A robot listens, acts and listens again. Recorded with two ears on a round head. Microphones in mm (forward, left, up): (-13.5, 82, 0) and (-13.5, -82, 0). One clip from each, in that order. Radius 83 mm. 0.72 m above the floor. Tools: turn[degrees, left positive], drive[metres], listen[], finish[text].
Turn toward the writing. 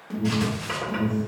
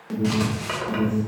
Thought: The writing: about 30° right or 150° right.
Action: turn[-30]
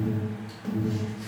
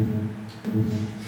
Action: listen[]
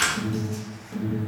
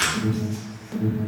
Action: finish[Found it: writing, straight ahead, 1 to 2 m away.]